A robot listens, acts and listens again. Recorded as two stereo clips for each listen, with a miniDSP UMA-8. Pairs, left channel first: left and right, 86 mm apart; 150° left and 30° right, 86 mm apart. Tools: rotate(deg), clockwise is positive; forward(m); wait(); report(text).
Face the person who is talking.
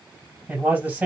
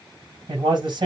rotate(25)
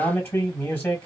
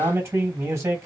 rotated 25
rotate(-20)
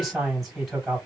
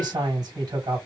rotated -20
report("Found it: a man speaking, straight ahead, 2 to 4 m away.")